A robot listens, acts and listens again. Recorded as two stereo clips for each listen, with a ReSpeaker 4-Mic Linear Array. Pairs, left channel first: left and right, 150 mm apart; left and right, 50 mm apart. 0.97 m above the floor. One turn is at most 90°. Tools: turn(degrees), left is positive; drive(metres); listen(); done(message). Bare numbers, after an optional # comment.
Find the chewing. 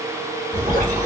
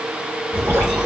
# The chewing: about 20° right or 160° right.
turn(-20)
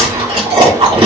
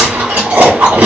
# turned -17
# So it is at 140° right.
turn(-90)
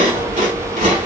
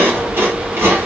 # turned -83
# The chewing is now 55° right.
turn(-55)
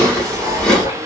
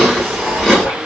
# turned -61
done("Facing the chewing.")